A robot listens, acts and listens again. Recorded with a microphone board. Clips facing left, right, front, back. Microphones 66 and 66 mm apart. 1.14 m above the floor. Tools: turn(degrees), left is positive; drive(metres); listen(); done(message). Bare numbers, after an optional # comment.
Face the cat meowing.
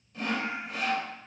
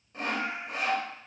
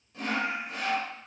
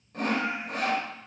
# The cat meowing: 85° right.
turn(-85)
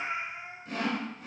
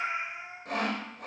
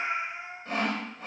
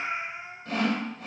# The cat meowing is now 20° right.
turn(-20)
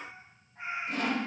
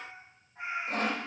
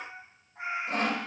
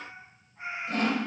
done("Found it: a cat meowing, straight ahead, over 4 m away.")